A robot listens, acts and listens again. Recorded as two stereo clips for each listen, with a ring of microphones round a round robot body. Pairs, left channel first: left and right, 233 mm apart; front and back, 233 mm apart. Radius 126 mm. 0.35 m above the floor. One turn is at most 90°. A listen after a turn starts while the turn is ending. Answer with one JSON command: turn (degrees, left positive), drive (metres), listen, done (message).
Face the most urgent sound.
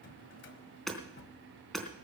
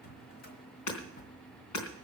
{"listen": true}
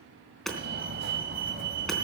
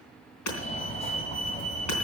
{"turn": -55}
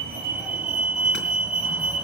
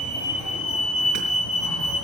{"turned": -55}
{"done": "Found it: a fire alarm, straight ahead."}